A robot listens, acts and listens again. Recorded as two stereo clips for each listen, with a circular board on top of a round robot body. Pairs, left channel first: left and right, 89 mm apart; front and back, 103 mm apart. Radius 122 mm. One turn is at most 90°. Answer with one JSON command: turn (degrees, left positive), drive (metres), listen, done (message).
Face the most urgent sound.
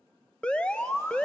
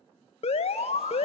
{"turn": 10}
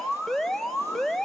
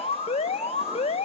{"done": "Found it: an alarm, straight ahead, 1 to 2 m away."}